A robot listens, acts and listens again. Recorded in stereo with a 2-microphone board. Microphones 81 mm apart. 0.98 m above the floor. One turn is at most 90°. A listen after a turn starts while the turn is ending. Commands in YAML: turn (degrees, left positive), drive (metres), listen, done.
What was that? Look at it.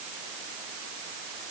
listen: true
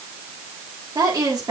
turn: -55
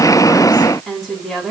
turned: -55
done: "Facing the woman speaking."